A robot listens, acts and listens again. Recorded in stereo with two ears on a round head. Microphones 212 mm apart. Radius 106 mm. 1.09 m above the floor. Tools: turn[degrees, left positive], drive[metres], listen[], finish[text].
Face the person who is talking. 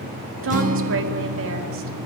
Thought: The woman speaking: about 60° right or 120° right.
Action: turn[-60]
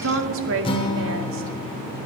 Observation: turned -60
Thought: So it is at 60° right.
Action: turn[-60]
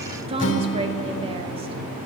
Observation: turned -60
Thought: The woman speaking is now 25° right.
Action: turn[-25]
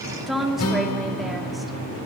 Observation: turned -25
Action: finish[Found it: a woman speaking, straight ahead.]